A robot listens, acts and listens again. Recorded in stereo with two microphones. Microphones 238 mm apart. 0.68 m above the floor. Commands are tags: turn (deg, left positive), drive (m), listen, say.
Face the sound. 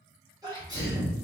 <turn deg="-15"/>
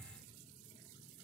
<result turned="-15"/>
<listen/>
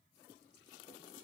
<say>I heard a sneeze, but can't make it out now. It was about straight ahead or 150° right.</say>